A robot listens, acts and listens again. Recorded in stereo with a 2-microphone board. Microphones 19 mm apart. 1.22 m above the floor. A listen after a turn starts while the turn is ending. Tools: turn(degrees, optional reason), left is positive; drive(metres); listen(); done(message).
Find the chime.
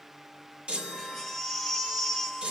turn(degrees=-90)
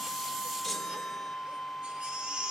turn(degrees=-10, reason="So it is at 10° right.")
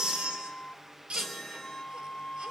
done("Facing the chime.")